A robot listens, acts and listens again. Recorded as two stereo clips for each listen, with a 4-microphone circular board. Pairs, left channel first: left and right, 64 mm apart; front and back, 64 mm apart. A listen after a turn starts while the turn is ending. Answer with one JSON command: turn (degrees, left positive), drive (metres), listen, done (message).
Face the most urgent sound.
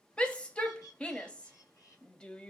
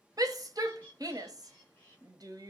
{"turn": 165}
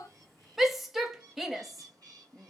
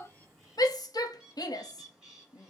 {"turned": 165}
{"done": "Facing the shout, under 1 m away."}